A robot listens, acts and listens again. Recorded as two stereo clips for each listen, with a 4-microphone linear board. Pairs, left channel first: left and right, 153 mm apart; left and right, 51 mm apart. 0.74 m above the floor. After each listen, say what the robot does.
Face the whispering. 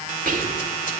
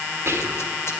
Turn 60° right.
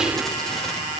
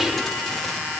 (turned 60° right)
Keep listening.
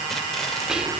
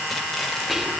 Found it: whispering, straight ahead.